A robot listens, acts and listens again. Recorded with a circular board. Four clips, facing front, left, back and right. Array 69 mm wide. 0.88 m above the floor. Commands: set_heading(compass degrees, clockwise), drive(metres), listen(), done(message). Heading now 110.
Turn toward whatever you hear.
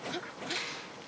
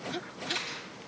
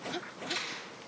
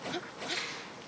set_heading(40)
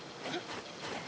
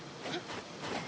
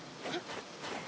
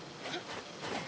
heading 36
listen()
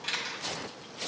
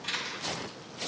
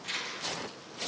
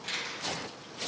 done("Facing the camera shutter.")